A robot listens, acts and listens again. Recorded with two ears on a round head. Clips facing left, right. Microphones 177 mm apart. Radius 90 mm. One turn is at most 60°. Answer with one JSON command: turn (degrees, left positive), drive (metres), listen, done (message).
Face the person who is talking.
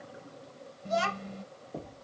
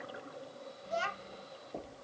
{"turn": 60}
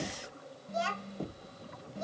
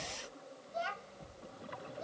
{"turn": 55}
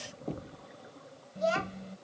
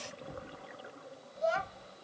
{"turn": 30}
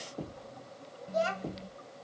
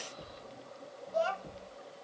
{"turn": 20}
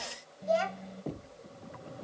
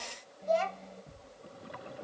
{"done": "Facing the child speaking."}